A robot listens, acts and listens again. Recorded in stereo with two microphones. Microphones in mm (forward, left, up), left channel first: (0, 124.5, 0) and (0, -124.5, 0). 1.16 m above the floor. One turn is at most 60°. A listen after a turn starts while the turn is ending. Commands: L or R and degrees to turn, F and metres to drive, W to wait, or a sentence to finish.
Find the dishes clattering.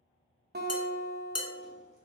L60
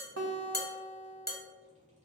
L40
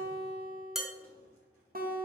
Facing the dishes clattering, under 1 m away.